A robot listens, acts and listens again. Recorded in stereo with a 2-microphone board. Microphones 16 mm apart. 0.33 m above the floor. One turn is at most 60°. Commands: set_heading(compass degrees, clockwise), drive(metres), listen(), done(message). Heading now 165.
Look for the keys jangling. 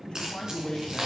set_heading(220)
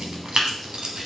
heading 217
set_heading(267)
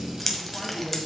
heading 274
set_heading(259)
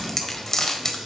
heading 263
set_heading(233)
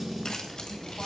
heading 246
set_heading(231)
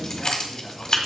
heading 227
set_heading(182)
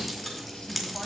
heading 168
done("Found it: keys jangling, straight ahead, 1 to 2 m away.")